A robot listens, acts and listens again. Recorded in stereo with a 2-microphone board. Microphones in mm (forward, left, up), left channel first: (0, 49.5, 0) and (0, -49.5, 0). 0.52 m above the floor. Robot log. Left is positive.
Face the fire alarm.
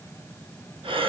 cmd idle
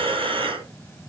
cmd idle
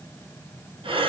end: I can't make out a fire alarm, only breathing.